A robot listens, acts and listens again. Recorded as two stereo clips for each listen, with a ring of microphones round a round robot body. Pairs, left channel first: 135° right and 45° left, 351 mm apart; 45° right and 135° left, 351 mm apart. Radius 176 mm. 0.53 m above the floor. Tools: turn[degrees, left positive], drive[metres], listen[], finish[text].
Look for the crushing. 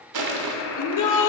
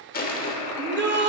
Thought: The crushing: 20° left.
Action: turn[20]
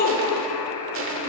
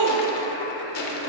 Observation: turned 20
Action: finish[Found it: crushing, straight ahead, 1 to 2 m away.]